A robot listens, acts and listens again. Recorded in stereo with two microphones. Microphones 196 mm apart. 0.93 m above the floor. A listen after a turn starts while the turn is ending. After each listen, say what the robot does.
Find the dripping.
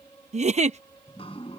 Turn 30° left.
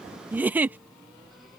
Facing the dripping.